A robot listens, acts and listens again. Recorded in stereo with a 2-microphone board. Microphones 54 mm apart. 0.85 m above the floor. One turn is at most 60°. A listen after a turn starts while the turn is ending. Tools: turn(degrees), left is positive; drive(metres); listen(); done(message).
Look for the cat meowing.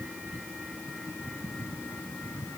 listen()
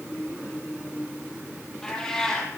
turn(degrees=30)
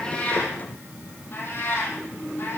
turn(degrees=60)
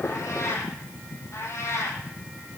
turn(degrees=60)
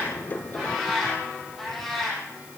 done("Facing the cat meowing, over 4 m away.")